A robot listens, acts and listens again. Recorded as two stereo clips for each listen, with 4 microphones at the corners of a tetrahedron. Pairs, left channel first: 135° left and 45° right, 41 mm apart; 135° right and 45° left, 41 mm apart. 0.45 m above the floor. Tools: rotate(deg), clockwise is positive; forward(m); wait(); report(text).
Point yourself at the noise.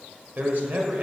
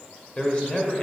rotate(75)
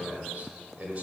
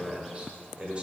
rotate(10)
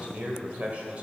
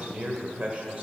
report("Found it: a man speaking, straight ahead, 1 to 2 m away.")